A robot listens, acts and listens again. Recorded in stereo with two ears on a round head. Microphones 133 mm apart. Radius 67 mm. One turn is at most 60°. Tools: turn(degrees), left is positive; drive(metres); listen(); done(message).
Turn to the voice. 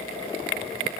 listen()
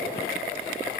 listen()
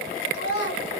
turn(degrees=60)
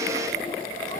turn(degrees=30)
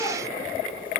listen()
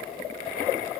done("I heard a child speaking from this way, but can't make it out now.")